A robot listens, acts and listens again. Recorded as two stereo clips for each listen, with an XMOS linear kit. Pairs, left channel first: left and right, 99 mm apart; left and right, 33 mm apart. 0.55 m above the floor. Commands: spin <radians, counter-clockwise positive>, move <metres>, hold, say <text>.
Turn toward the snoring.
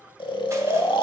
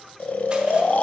spin 0.96
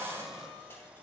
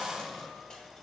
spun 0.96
hold
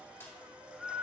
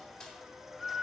say Found it: snoring, straight ahead, under 1 m away.